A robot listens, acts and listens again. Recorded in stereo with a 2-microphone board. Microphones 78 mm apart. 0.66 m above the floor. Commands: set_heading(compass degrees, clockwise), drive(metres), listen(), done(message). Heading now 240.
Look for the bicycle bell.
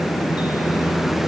listen()
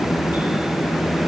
listen()
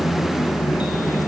done("I can't make out a bicycle bell to turn to.")